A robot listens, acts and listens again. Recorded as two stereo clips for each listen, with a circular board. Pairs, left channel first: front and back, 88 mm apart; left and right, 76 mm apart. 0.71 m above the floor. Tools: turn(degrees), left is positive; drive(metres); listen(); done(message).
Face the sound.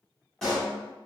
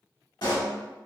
turn(degrees=85)
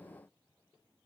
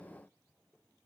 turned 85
done("I heard a pop from this way, but can't make it out now.")